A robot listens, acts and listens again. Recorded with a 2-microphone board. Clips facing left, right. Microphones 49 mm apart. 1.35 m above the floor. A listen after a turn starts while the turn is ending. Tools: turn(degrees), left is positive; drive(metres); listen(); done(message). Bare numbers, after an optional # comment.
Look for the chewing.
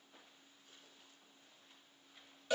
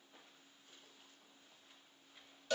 listen()
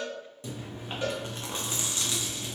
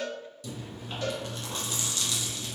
# The chewing: about 30° left or 150° left.
turn(30)
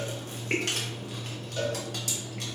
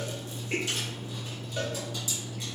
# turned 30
# So it is at 120° left.
turn(120)
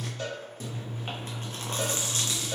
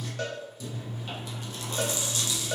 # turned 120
# The chewing is now 40° left.
turn(40)
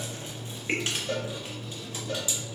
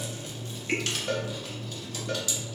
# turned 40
# The chewing is now 20° left.
turn(20)
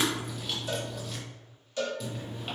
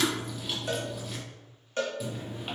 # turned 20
done("Facing the chewing.")